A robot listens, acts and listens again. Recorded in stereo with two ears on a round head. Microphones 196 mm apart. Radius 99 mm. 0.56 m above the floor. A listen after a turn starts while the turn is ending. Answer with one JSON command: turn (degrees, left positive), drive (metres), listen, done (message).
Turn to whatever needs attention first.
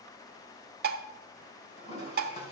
{"listen": true}
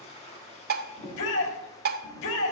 {"turn": 65}
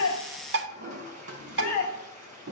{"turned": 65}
{"turn": 45}
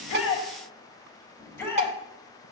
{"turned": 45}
{"turn": 10}
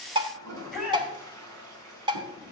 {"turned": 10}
{"done": "Found it: a shout, straight ahead, over 4 m away."}